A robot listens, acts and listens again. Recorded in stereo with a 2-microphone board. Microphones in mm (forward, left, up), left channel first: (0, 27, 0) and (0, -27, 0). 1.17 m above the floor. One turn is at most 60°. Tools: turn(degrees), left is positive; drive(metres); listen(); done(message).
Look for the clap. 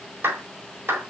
turn(degrees=-45)
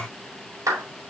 turn(degrees=-60)
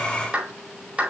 turn(degrees=-20)
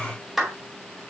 done("Facing the clap.")